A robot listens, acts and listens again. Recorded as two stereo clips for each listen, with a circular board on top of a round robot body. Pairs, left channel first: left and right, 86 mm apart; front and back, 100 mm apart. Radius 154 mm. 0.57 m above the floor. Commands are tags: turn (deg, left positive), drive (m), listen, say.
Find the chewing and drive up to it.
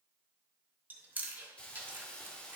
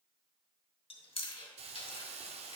<turn deg="-20"/>
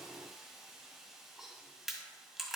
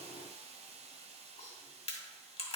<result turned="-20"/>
<drive m="1.0"/>
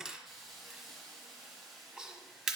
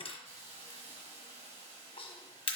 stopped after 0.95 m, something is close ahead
<say>Arrived at the chewing, straight ahead.</say>